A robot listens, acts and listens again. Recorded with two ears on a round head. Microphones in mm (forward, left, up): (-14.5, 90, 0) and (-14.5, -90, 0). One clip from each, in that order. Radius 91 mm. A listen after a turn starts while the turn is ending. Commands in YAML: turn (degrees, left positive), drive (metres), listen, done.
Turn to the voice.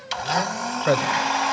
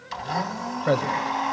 turn: 25
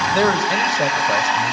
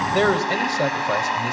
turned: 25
done: "Found it: a man speaking, straight ahead, 1 to 2 m away."